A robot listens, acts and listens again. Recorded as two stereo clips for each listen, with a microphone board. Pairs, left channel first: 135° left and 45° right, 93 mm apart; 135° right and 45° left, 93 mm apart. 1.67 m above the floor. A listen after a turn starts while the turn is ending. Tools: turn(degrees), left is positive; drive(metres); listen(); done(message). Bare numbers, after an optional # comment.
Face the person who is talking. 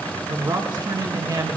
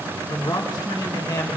# The man speaking: 90° right.
turn(-90)
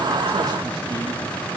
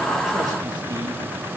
listen()
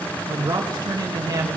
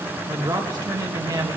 done("Found it: a man speaking, straight ahead, 2 to 4 m away.")